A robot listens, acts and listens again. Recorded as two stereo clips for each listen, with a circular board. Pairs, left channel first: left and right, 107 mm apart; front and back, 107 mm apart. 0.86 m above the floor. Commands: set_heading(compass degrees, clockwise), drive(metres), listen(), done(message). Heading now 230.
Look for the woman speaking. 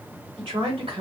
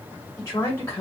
set_heading(290)
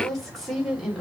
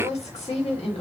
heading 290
done("Facing the woman speaking.")